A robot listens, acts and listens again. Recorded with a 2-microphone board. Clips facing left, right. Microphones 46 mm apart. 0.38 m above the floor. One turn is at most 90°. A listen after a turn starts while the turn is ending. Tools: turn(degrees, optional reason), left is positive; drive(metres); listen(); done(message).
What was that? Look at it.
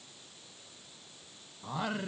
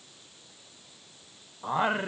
turn(degrees=-35, reason="The singing: about 35° right or 145° right.")
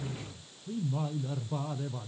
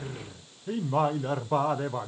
turn(degrees=-90, reason="So it is at 130° right.")
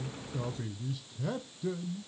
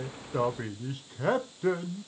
turn(degrees=-55, reason="The singing is now 55° right.")
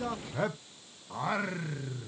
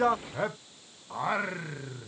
turn(degrees=-10, reason="The singing is now 10° right.")
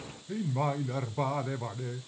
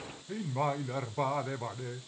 done("Found it: singing, straight ahead.")